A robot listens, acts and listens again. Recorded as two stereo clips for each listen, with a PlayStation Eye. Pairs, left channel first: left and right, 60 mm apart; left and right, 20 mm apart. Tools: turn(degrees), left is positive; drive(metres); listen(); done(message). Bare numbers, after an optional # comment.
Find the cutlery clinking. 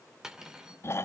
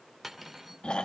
turn(-30)
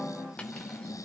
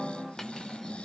listen()
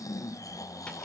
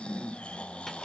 listen()
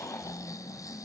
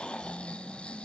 done("I heard cutlery clinking, but can't make it out now. It was about 20° left or 140° right.")